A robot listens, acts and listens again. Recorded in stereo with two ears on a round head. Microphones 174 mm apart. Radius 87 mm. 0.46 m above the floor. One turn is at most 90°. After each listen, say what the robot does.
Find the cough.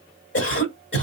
Turn 55° left.
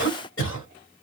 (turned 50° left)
Turn 60° left.
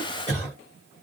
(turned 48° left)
Turn 10° left.
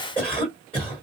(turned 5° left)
Facing the cough.